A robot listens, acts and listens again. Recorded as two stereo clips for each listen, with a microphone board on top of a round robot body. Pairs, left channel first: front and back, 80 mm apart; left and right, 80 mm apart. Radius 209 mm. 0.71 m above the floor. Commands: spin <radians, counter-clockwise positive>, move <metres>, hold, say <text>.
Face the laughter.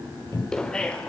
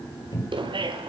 spin -1.40
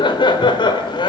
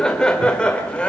spin 0.26
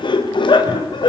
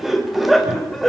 say Found it: laughter, straight ahead, over 4 m away.